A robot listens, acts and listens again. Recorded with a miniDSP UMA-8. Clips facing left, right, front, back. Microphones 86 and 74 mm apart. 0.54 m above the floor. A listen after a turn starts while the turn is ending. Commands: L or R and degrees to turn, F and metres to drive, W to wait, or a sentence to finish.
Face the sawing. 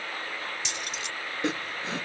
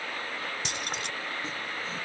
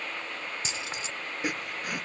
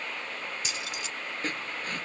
L80
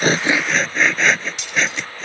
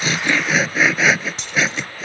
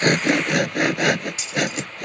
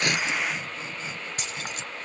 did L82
Facing the sawing.